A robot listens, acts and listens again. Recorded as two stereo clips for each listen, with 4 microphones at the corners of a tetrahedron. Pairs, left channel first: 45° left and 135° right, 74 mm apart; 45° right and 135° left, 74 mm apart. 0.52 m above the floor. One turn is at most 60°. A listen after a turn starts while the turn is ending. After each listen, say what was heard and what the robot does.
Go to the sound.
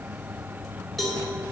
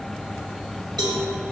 The cowbell: 130° left. Turn 60° left.
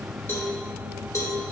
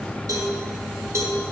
The cowbell is now 90° left. Turn 60° left.
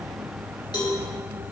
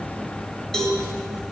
The cowbell is now 35° left. Turn 35° left.
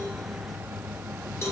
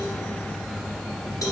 The cowbell is now 10° right. Turn 10° right.
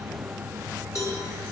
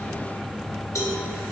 Drive 1.0 m forward.
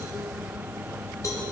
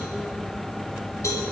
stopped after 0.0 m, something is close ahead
Blocked. The cowbell is further on, straight ahead.